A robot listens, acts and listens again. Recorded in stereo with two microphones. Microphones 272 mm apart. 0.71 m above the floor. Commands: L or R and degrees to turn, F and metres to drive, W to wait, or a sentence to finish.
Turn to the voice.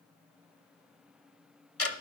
W
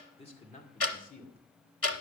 L35
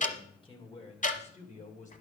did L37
L30
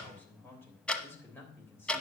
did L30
L10
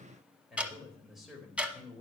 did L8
Found it: a man speaking, straight ahead.